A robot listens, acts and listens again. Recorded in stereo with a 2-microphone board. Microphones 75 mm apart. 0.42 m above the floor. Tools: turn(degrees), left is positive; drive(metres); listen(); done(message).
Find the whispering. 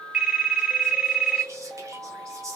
turn(degrees=-40)
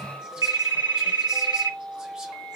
listen()
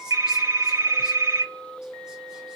listen()
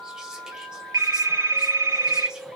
done("I heard whispering, but can't make it out now. It was about straight ahead or 100° right.")